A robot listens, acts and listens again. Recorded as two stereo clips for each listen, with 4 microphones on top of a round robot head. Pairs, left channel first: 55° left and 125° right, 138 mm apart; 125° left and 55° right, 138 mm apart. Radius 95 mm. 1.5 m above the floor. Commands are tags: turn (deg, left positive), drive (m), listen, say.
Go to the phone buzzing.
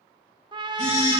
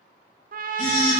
<turn deg="95"/>
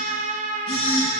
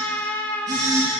<drive m="1.0"/>
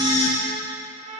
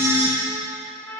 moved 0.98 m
<turn deg="15"/>
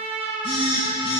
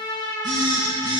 <drive m="1.0"/>
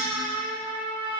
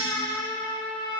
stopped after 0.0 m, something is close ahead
<listen/>
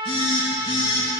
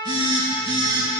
<say>Something is in my way. I am facing the phone buzzing but have not reached it.</say>